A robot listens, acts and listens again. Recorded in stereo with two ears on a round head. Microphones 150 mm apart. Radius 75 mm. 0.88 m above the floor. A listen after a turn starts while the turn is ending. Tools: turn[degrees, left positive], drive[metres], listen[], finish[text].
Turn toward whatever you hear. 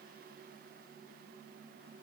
Action: listen[]
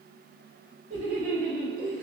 Thought: The laughter: about 45° right or 135° right.
Action: turn[-45]
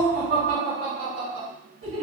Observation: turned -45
Thought: So it is at 80° right.
Action: turn[-80]
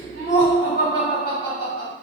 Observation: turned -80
Thought: The laughter is now 25° right.
Action: turn[-25]
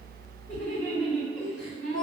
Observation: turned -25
Action: finish[Facing the laughter, 2 to 4 m away.]